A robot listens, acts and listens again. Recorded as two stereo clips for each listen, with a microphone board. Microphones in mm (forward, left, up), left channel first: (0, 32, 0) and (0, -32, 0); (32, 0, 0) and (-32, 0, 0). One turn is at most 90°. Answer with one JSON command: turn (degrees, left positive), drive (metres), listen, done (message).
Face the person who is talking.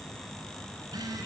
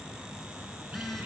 {"listen": true}
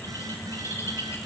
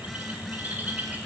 {"listen": true}
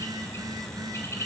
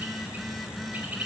{"done": "I can't make out anyone speaking, only a phone buzzing and a bird."}